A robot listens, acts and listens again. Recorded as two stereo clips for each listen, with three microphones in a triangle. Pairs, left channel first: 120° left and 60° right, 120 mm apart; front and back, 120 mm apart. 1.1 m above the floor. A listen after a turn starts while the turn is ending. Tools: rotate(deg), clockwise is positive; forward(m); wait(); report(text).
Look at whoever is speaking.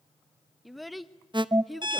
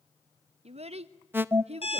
rotate(150)
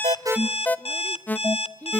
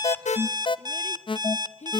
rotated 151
report("Facing the child speaking.")